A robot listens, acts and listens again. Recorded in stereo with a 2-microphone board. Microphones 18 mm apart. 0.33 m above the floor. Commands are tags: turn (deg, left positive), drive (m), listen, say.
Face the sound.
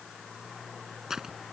<turn deg="-35"/>
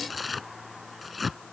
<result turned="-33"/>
<say>Facing the tearing paper.</say>